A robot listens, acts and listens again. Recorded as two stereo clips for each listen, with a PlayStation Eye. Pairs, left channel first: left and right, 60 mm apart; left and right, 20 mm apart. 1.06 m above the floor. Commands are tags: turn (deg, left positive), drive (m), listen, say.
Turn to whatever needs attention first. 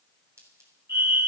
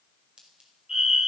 <turn deg="-50"/>
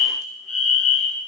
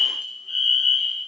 <say>Facing the fire alarm, over 4 m away.</say>